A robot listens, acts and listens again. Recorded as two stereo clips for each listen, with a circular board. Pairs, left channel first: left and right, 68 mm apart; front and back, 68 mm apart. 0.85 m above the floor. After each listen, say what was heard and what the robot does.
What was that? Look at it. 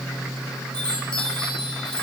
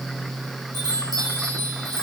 The chime: 165° left. Turn 165° left.
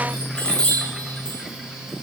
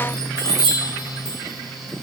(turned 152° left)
The chime is now 10° left. Turn 10° left.
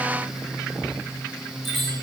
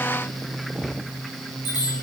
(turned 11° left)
Found it: a chime, straight ahead, over 4 m away.